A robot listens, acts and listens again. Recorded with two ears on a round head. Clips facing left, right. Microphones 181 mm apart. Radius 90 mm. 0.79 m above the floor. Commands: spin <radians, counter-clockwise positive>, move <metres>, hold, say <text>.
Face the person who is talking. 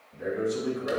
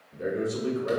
spin -0.87
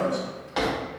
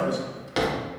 spin -1.40
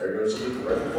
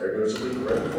spin -0.35
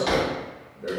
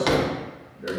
say Facing the man speaking, 1 to 2 m away.